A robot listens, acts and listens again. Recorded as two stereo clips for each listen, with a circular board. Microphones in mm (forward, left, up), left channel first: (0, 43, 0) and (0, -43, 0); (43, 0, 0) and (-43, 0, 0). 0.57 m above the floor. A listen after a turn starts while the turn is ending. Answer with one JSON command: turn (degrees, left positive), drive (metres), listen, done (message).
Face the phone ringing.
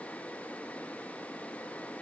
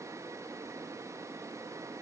{"listen": true}
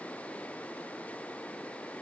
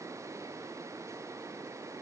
{"listen": true}
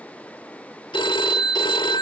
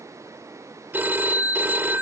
{"turn": 110}
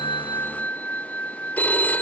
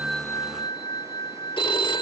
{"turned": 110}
{"turn": 20}
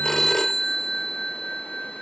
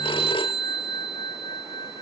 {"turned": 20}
{"done": "Found it: a phone ringing, straight ahead."}